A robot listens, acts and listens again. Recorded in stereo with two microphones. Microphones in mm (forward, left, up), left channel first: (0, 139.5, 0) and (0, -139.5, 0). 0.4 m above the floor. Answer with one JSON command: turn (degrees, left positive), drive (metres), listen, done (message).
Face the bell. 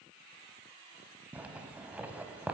{"listen": true}
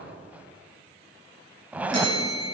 {"turn": -70}
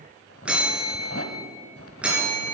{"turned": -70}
{"done": "Facing the bell."}